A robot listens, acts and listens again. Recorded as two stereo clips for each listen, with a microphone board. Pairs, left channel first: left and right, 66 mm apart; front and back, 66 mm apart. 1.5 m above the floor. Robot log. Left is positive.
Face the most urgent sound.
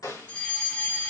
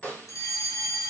note: The fire alarm: 20° left.
cmd yaw +20
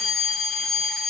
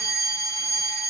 end: Facing the fire alarm.